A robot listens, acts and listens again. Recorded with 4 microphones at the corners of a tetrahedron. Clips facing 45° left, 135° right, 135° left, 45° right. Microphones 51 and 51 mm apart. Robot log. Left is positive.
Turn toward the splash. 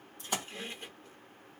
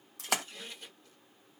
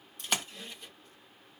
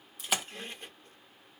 note: The splash: 130° right.
cmd yaw -130
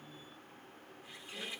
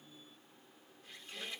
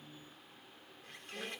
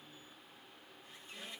end: Facing where the splash came from. I can't hear it now.